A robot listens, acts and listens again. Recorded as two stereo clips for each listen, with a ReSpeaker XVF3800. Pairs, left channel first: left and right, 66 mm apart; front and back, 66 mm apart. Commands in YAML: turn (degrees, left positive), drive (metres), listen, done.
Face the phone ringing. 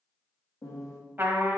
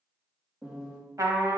listen: true
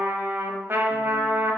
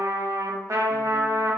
listen: true
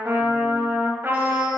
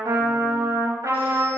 done: "I can't make out a phone ringing to turn to."